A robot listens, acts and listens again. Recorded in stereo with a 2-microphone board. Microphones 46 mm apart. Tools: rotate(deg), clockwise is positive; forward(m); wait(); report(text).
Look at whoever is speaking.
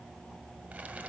wait()
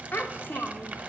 rotate(-50)
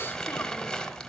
wait()
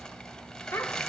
rotate(-80)
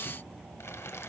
wait()
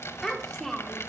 rotate(-10)
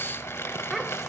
report("Found it: a child speaking, straight ahead.")